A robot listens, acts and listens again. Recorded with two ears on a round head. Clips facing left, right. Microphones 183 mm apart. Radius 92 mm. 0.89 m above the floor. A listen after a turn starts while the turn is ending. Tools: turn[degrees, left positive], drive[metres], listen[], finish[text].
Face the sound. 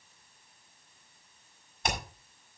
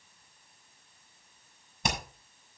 Action: turn[-90]
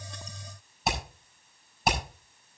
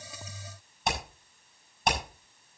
Action: finish[Facing the hammering.]